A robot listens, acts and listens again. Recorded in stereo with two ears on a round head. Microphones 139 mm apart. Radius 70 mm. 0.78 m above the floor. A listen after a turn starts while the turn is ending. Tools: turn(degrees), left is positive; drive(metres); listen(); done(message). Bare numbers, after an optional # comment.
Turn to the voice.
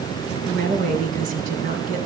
# The woman speaking: about 55° right or 125° right.
turn(-55)
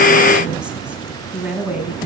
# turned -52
# So it is at 10° right.
turn(-10)
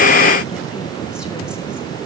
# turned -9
listen()
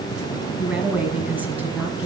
# The woman speaking is now 10° right.
turn(-10)
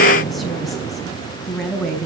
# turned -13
done("Facing the woman speaking, over 4 m away.")